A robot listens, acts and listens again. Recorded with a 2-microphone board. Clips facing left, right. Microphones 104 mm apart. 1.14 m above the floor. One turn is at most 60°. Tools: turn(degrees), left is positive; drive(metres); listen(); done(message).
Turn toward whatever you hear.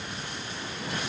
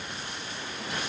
listen()
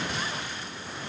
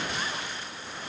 listen()
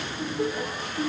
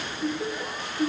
turn(degrees=60)
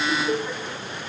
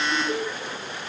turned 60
turn(degrees=35)
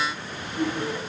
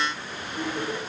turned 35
turn(degrees=-10)
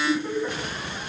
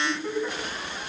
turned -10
done("Found it: laughter, straight ahead, over 4 m away.")